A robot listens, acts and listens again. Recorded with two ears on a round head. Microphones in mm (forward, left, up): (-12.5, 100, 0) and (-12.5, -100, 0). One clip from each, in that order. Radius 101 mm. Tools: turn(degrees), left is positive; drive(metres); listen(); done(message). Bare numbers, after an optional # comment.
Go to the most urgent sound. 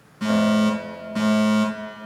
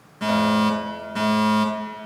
turn(-30)
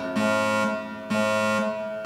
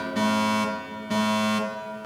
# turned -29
# So it is at 25° left.
turn(25)
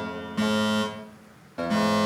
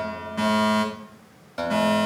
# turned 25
drive(1.0)
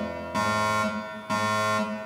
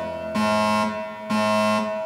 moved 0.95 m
drive(1.0)
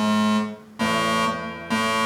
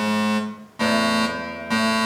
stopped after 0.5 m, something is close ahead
done("I am next to the fire alarm.")